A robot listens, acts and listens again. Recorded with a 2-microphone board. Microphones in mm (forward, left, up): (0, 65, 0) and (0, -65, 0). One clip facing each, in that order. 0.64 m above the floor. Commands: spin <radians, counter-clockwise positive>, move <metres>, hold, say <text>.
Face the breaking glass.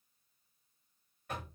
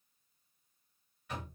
hold
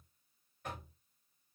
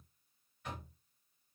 hold
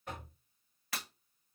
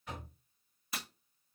spin 1.57
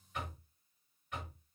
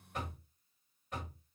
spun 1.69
say I heard breaking glass from this way, but can't make it out now.